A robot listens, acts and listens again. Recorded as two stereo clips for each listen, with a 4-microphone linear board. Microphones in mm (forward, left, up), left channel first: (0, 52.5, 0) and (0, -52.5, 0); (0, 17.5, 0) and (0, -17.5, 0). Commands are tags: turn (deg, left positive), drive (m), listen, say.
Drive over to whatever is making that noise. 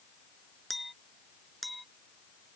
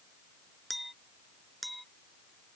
<turn deg="30"/>
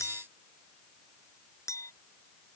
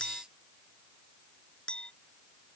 <turn deg="150"/>
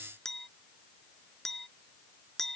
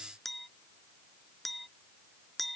<drive m="1.0"/>
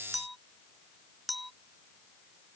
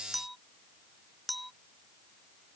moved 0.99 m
<drive m="1.0"/>
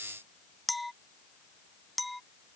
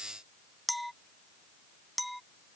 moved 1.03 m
<drive m="1.0"/>
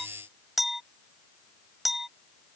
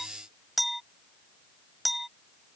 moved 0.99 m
<drive m="1.0"/>
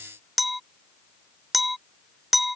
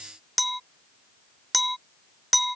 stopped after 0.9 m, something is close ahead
<say>I am next to the clink.</say>